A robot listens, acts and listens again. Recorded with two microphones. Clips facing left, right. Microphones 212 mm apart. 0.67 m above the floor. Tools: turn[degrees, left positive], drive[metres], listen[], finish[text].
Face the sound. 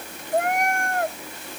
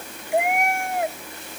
Action: turn[-30]
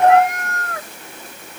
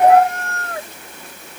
Thought: So it is at 155° right.
Action: turn[-155]
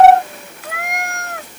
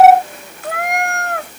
Thought: The cat meowing is now 65° right.
Action: turn[-65]
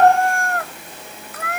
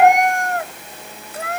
Thought: The cat meowing is now 30° right.
Action: turn[-30]
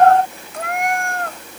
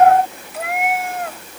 Action: finish[Facing the cat meowing.]